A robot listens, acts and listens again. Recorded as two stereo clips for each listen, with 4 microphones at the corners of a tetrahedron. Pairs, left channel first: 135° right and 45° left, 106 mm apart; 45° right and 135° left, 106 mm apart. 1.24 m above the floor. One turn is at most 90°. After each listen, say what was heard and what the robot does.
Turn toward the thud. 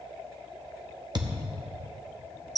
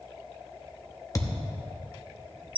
The thud: 10° left. Turn 10° left.
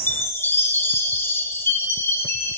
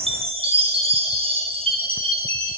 Facing where the thud came from. I can't hear it now.